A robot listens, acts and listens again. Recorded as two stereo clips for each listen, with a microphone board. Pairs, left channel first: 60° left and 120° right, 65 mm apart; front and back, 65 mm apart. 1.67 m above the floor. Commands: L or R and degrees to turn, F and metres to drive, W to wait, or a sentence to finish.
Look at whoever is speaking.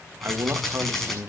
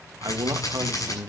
R165
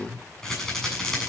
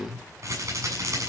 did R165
Facing the man speaking, 1 to 2 m away.